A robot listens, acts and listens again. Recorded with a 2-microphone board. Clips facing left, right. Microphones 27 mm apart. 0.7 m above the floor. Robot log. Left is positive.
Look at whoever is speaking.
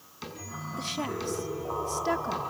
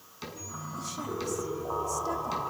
note: The woman speaking: about 50° left or 130° left.
cmd yaw +50
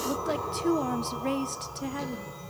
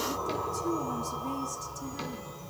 note: So it is at 70° left.
cmd yaw +70
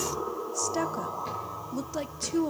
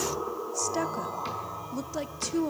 end: Facing the woman speaking.